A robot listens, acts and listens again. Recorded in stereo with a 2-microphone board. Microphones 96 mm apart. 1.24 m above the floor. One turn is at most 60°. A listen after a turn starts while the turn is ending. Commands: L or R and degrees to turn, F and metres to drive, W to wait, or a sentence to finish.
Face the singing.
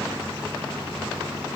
W
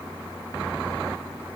W
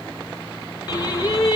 L40
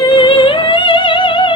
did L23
L60
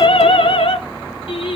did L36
L60
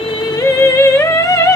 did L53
L35
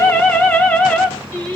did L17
L15
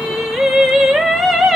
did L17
Facing the singing.